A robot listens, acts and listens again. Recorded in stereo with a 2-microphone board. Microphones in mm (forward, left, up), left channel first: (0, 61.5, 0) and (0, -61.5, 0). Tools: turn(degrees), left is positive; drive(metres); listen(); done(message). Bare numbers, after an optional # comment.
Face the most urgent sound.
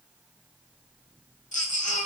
turn(90)
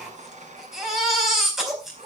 done("Facing the baby crying, over 4 m away.")